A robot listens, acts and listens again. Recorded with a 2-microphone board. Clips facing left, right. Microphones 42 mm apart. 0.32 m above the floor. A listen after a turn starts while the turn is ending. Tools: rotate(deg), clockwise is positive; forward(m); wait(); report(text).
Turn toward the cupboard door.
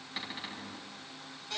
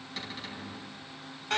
rotate(-15)
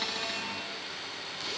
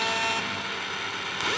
wait()
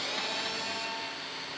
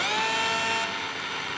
wait()
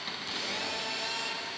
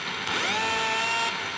report("I heard a cupboard door, but can't make it out now. It was about straight ahead or 150° left.")